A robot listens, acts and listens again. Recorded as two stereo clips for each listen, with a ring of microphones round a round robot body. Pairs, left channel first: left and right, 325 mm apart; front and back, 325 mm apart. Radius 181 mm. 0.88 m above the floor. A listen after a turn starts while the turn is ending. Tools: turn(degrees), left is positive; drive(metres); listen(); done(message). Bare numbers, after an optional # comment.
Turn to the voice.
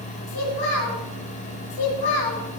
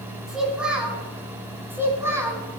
# The child speaking: 100° left.
turn(100)
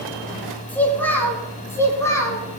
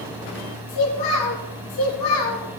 # The child speaking is now 10° left.
turn(10)
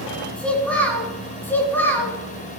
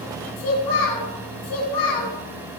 done("Found it: a child speaking, straight ahead.")